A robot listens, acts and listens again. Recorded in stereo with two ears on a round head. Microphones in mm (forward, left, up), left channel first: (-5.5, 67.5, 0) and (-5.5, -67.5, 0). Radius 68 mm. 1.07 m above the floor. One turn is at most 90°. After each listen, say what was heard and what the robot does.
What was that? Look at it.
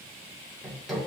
Turn 30° left.
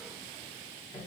So it is at 150° left. Turn 90° left.
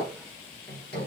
The hammering is now 70° left. Turn 70° left.
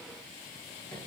The hammering is now 15° left. Turn 15° left.
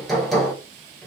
Facing the hammering, 1 to 2 m away.